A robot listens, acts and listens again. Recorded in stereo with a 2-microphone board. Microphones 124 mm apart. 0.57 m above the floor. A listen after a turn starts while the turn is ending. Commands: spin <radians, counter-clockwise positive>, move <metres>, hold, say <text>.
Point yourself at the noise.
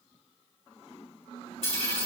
spin 0.87
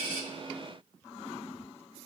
hold
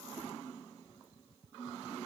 say I heard a dropped coin, but can't make it out now. It was about straight ahead or 80° left.